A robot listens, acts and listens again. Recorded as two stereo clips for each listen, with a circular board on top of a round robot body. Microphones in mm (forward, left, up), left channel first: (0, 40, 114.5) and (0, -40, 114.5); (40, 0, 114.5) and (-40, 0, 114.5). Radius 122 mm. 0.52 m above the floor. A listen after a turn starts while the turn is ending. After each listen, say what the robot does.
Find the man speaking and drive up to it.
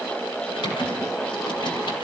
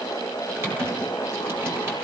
Keep listening.
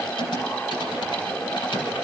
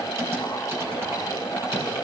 Keep listening.
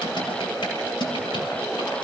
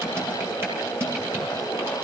I can't make out a man speaking, only typing on a keyboard.